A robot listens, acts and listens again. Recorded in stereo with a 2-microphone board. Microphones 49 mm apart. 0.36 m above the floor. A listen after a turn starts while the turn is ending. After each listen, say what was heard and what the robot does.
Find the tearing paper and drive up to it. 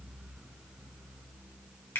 Keep listening.
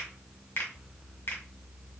Keep listening.
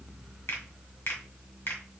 I can't make out tearing paper, only a finger snap.